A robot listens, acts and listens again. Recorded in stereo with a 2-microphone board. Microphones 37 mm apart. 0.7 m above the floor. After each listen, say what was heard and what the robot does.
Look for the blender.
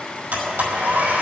The blender: about 75° right or 105° right. Turn 75° right.
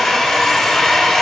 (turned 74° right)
Facing the blender.